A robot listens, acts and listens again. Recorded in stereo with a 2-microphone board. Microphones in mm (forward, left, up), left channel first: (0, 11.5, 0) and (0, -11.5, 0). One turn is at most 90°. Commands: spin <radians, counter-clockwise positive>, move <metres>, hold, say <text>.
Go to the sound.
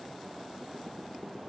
hold
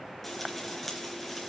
spin 0.52
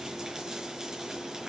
spin -0.52
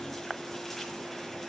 spin 0.17
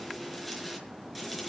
move 1.0
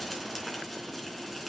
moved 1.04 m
move 1.0
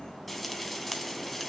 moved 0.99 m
move 1.0
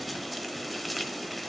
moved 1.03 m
move 1.0
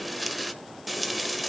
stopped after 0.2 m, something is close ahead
say Arrived at the frying, straight ahead.